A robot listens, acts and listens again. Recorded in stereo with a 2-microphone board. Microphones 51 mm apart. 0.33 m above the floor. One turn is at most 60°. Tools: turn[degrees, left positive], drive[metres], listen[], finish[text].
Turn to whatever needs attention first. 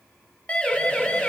Thought: The siren: about 25° left or 155° left.
Action: turn[25]
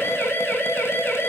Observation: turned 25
Thought: So it is at 130° left.
Action: turn[60]
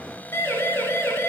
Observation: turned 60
Thought: The siren is now 70° left.
Action: turn[60]
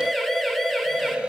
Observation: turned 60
Action: finish[Facing the siren.]